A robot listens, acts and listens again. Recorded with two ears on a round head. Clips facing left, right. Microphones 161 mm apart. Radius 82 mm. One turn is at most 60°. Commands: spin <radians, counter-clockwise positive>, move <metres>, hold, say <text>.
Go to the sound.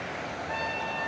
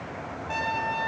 spin -1.05
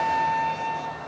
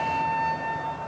spin -0.26
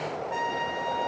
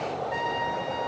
move 1.0
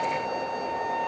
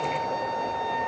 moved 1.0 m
spin 0.17
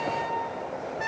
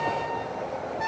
move 1.0
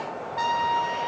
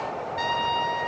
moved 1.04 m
move 1.0
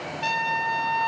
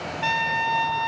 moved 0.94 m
move 1.0
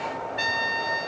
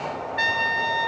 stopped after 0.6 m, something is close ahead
say Arrived at the trumpet, straight ahead.